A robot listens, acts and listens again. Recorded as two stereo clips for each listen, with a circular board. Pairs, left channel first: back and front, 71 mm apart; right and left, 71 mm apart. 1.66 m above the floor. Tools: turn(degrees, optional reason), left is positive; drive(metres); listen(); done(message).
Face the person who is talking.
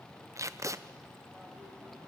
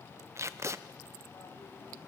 listen()
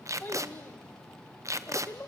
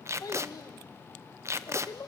turn(degrees=-120, reason="The child speaking: 120° right.")
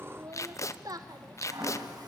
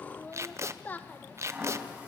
turn(degrees=-25, reason="The child speaking is now 25° right.")
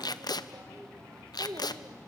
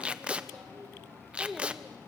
done("Found it: a child speaking, straight ahead.")